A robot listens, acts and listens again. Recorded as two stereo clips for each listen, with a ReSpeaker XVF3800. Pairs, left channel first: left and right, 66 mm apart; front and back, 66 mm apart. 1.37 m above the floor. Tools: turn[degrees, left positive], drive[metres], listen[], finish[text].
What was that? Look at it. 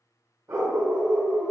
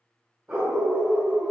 Thought: The dog barking: 125° right.
Action: turn[-125]
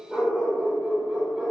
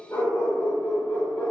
Thought: The dog barking is now 30° right.
Action: turn[-30]
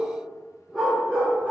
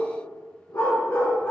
Thought: The dog barking is now 35° right.
Action: turn[-35]
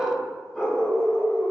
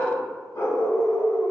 Action: finish[Facing the dog barking.]